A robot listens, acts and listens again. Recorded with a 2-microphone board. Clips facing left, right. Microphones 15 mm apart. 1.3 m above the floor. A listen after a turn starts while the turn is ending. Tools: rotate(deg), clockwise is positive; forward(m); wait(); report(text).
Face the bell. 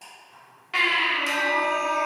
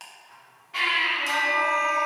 rotate(-30)
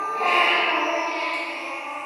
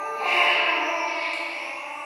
wait()
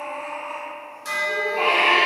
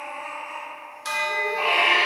rotate(25)
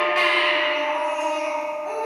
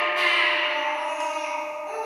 report("Facing the bell.")